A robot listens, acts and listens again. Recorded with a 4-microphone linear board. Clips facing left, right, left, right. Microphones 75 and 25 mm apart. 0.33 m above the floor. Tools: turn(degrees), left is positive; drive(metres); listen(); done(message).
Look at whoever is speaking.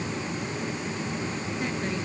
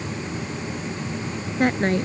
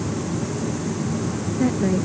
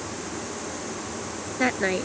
turn(degrees=-60)
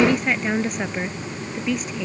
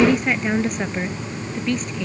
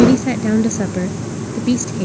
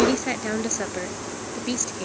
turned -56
done("Facing the woman speaking.")